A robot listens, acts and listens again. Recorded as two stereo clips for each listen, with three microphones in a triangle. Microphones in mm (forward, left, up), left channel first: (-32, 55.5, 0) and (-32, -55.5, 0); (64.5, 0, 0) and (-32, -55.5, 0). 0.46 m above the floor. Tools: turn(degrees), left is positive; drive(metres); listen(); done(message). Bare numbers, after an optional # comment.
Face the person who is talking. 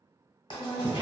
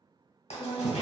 # The woman speaking: 170° left.
turn(170)
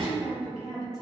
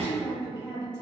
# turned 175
done("Found it: a woman speaking, straight ahead.")